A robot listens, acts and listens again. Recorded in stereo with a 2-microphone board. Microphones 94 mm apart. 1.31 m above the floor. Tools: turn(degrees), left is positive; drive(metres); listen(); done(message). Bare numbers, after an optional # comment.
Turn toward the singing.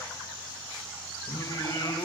# The singing: about 45° left or 135° left.
turn(45)
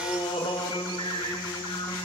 # So it is at 55° left.
turn(55)
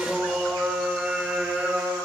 # The singing is now 15° right.
turn(-15)
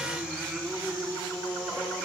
done("Facing the singing.")